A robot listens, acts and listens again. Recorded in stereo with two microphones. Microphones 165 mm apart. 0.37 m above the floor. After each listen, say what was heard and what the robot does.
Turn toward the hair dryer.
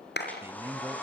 Turn 30° left.
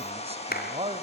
So it is at 140° left. Turn 140° left.
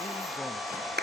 Found it: a hair dryer, straight ahead.